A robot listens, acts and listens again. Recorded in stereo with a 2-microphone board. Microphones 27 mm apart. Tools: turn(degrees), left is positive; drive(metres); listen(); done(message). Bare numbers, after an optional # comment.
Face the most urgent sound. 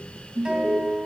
# The alarm: about 45° right or 135° right.
turn(-45)
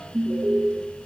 # So it is at 90° right.
turn(-90)
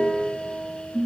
# The alarm is now 10° right.
turn(-10)
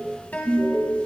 done("Found it: an alarm, straight ahead, 2 to 4 m away.")